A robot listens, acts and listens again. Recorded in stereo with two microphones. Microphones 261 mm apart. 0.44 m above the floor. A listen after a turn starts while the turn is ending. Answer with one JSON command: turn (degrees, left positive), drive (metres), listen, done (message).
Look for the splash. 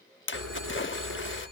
{"turn": 50}
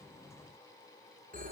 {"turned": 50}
{"listen": true}
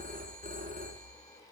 {"done": "I heard a splash, but can't make it out now. It was about straight ahead or 80° left."}